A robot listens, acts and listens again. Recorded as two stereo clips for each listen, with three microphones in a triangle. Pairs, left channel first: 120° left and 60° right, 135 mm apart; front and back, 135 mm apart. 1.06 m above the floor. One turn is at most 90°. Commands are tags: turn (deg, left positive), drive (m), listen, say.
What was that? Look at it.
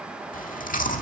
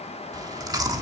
<turn deg="90"/>
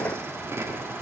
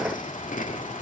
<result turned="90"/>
<turn deg="10"/>
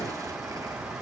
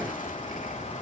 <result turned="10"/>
<listen/>
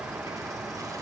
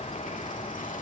<listen/>
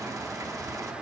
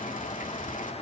<say>Found it: chewing, straight ahead, 1 to 2 m away.</say>